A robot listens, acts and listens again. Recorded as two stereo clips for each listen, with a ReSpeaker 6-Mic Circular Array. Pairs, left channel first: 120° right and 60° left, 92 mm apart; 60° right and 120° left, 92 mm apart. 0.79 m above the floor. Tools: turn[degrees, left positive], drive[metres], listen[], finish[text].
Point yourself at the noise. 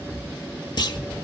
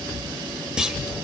Thought: The clunk: 160° right.
Action: turn[-160]
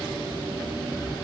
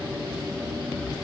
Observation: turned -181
Thought: Nothing new. It was at 25° left.
Action: turn[25]
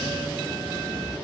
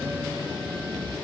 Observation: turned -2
Thought: Nothing new. It was at 25° left.
Action: turn[25]
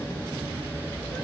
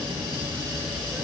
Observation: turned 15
Thought: Nothing new. It was at 10° left.
Action: turn[10]
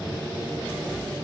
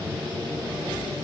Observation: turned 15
Action: finish[I heard a clunk from this way, but can't make it out now.]